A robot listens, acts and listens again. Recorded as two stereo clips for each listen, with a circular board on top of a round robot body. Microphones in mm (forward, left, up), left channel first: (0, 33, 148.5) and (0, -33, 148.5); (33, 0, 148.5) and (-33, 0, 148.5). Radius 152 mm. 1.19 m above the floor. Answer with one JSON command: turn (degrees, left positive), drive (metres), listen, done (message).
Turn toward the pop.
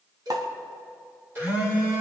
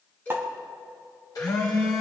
{"turn": -120}
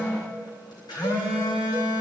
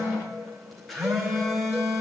{"done": "I heard a pop from this way, but can't make it out now."}